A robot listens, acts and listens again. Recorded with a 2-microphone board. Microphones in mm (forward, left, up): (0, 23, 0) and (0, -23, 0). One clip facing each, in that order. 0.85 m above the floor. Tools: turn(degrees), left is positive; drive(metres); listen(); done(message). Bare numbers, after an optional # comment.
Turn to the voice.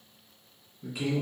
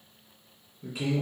turn(30)
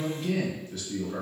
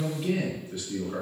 # So it is at 25° right.
turn(-25)
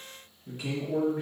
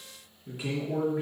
done("Found it: a man speaking, straight ahead, 1 to 2 m away.")